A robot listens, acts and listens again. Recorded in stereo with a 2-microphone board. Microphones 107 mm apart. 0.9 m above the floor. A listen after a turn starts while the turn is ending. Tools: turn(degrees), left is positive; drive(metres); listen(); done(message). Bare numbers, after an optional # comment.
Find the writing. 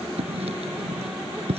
# The writing: about 70° right or 110° right.
turn(-70)
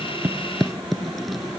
done("Facing the writing.")